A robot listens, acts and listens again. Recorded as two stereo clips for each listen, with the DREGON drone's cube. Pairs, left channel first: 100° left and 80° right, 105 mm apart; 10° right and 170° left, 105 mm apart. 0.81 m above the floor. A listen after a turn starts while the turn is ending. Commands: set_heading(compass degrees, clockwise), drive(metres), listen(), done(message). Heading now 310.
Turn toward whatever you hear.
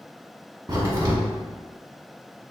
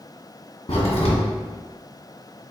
set_heading(335)
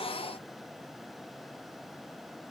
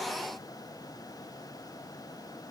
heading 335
done("Facing where the crack came from. I can't hear it now.")